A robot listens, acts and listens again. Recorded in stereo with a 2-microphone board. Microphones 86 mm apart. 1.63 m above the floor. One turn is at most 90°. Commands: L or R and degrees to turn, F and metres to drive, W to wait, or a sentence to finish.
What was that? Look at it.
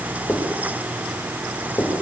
L35
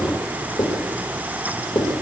L90
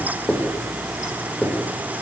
L20
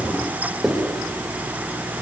Facing the writing, over 4 m away.